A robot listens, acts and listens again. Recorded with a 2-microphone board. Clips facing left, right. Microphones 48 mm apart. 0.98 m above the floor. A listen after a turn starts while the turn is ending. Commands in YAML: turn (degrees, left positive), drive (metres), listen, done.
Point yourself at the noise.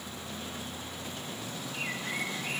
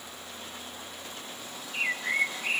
turn: -50
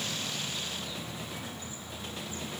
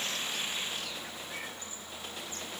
listen: true
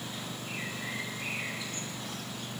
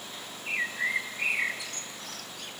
turn: -80
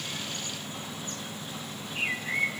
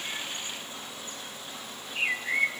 turn: -15
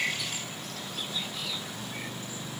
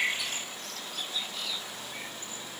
listen: true
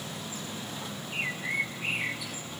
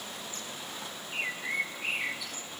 done: "Found it: a bird, straight ahead, under 1 m away."